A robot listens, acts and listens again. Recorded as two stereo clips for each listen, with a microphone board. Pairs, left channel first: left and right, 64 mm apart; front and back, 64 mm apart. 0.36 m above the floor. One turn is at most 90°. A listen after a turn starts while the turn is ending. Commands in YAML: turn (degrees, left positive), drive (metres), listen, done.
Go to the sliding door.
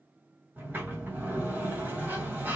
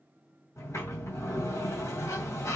turn: -35
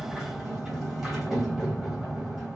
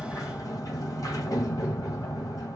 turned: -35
turn: -10
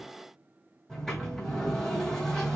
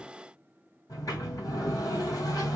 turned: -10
drive: 1.0
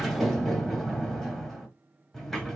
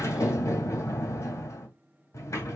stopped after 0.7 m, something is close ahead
done: "Arrived at the sliding door, straight ahead."